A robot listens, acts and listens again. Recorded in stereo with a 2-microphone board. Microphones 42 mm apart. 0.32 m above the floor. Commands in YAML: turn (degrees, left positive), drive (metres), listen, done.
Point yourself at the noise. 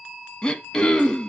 turn: 20
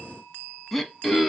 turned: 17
done: "Found it: throat clearing, straight ahead."